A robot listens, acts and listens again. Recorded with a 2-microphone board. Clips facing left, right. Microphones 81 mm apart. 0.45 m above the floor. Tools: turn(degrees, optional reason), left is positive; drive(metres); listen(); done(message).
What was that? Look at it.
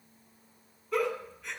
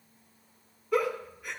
turn(degrees=-30)
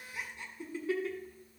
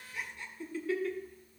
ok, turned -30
turn(degrees=20, reason="So it is at 20° left.")
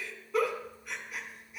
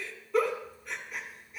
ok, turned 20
done("Found it: a giggle, straight ahead, 1 to 2 m away.")